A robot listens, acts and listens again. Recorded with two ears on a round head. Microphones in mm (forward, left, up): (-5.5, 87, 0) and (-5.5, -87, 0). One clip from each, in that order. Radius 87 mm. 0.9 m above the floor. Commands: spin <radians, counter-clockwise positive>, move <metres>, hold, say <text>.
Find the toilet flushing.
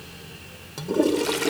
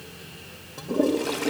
spin 1.57
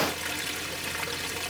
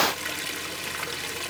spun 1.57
say Found it: a toilet flushing, straight ahead.